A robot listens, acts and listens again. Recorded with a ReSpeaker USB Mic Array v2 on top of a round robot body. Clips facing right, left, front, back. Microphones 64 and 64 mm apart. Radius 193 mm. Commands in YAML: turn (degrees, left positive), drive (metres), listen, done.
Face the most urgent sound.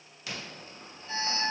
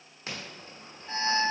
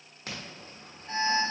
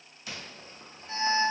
turn: 35
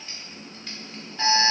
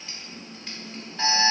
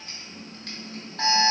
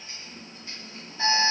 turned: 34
done: "Found it: an alarm, straight ahead, 1 to 2 m away."